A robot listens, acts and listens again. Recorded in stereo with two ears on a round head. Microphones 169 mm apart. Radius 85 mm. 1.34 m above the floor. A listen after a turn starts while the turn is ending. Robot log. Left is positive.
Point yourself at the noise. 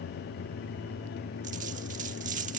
note: The dropped coin: about 40° right or 140° right.
cmd yaw -40
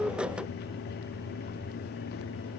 cmd idle
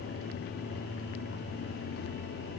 end: I heard a dropped coin, but can't make it out now. It was about straight ahead or 100° right.